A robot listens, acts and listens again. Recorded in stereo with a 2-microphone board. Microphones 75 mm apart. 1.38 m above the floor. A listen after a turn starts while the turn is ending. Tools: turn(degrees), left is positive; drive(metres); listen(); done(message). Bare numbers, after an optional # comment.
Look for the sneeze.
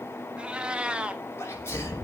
# The sneeze: about 35° left or 145° left.
turn(35)
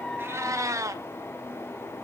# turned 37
listen()
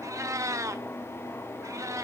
done("I heard a sneeze, but can't make it out now. It was about straight ahead or 110° left.")